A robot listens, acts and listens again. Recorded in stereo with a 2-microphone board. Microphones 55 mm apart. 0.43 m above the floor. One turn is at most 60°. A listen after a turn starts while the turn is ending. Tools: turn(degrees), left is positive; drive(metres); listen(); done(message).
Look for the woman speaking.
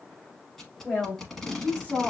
turn(degrees=30)
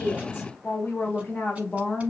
turn(degrees=25)
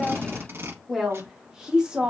turn(degrees=-20)
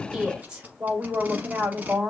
turn(degrees=-20)
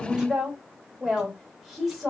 done("Facing the woman speaking, 1 to 2 m away.")